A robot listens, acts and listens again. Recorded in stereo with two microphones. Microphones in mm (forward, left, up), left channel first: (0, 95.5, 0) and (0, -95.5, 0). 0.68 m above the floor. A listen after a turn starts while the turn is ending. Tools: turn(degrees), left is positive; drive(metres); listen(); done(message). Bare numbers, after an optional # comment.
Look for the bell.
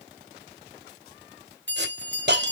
# The bell: about 70° left or 110° left.
turn(70)
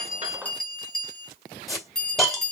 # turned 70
done("Found it: a bell, straight ahead, 2 to 4 m away.")